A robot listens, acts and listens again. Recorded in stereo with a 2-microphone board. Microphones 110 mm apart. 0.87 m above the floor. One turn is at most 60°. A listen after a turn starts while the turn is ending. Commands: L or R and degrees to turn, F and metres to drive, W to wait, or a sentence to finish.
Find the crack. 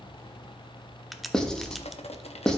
L30
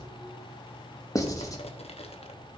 W
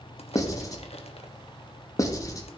I heard a crack, but can't make it out now. It was about 30° right or 150° left.